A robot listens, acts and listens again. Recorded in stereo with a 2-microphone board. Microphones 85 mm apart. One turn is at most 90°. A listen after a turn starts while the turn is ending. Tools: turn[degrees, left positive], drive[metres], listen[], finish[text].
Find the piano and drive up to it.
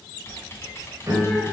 Thought: The piano: about 35° right or 145° right.
Action: turn[-35]
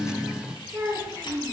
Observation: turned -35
Action: listen[]
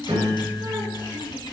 Thought: So it is at 105° right.
Action: turn[-90]
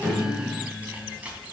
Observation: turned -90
Thought: The piano is now 20° left.
Action: turn[20]
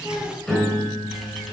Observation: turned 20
Action: drive[1.0]
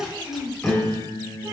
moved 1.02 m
Thought: The piano is now 10° left.
Action: turn[10]
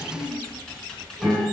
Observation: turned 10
Action: drive[1.0]
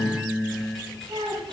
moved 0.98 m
Action: drive[1.0]
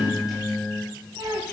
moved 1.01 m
Action: drive[1.0]
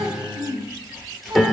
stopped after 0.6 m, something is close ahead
Action: finish[Arrived at the piano, straight ahead.]